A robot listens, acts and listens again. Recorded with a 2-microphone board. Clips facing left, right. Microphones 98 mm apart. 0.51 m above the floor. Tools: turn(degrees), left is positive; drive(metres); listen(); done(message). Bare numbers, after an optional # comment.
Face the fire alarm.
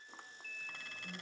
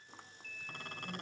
listen()
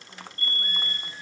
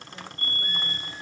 # The fire alarm: about 65° left or 115° left.
turn(65)
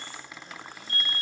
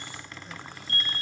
# So it is at 15° left.
turn(15)
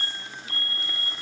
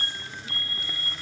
done("Facing the fire alarm.")